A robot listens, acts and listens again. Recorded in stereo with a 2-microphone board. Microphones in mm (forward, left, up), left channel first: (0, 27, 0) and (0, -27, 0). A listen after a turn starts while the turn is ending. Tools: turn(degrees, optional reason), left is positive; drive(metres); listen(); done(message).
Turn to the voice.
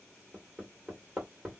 listen()
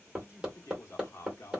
turn(degrees=55, reason="The man speaking: about 55° left or 125° left.")
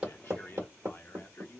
turn(degrees=50, reason="So it is at 50° left.")
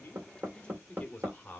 turn(degrees=30, reason="The man speaking is now 30° left.")
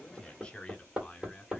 turn(degrees=20, reason="The man speaking is now 20° left.")
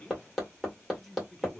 done("Facing the man speaking, 1 to 2 m away.")